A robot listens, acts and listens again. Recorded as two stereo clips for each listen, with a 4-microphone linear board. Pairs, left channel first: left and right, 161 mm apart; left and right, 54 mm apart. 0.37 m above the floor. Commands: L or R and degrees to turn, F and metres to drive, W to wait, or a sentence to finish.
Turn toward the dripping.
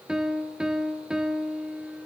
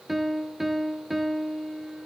W
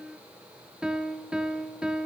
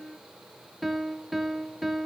W
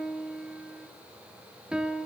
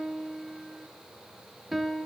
I can't make out dripping to turn to.